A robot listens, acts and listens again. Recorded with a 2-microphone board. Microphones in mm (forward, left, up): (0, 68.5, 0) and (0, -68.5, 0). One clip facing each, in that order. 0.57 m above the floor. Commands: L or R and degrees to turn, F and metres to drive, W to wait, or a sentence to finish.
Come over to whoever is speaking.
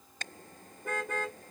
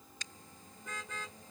W
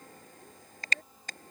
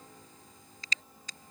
W
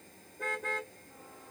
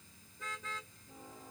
I can't make out anyone speaking, only a car horn.